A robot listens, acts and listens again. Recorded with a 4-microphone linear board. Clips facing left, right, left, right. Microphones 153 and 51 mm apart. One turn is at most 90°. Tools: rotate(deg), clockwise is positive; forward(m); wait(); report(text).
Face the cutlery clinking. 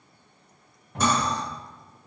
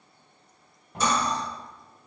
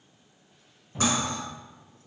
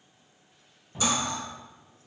rotate(-55)
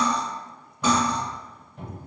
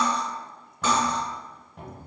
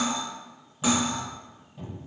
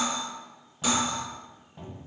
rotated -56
rotate(-20)
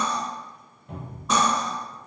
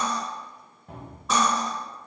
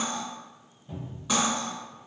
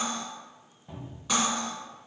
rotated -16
report("Facing the cutlery clinking.")